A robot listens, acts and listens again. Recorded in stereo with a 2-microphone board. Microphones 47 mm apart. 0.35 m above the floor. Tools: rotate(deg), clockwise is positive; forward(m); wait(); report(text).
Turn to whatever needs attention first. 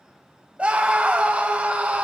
rotate(30)
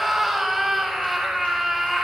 report("Found it: a scream, straight ahead, 1 to 2 m away.")